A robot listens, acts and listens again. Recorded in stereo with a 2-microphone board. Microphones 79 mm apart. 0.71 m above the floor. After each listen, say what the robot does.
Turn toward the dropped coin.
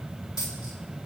Turn 70° left.
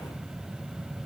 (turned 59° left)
Keep listening.
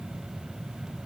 I heard a dropped coin, but can't make it out now. It was about 10° left or 55° left.